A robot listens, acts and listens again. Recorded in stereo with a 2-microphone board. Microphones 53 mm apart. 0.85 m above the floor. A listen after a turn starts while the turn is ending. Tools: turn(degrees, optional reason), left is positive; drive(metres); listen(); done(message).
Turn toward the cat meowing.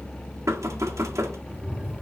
turn(degrees=-20, reason="The cat meowing: about 20° right or 160° right.")
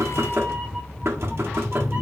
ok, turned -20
turn(degrees=-25, reason="The cat meowing: about 25° right or 155° right.")
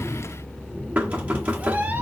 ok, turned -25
turn(degrees=-35, reason="The cat meowing: about 35° right or 145° right.")
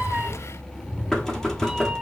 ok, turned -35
turn(degrees=-15, reason="So it is at 15° right.")
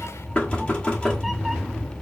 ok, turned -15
done("Facing the cat meowing.")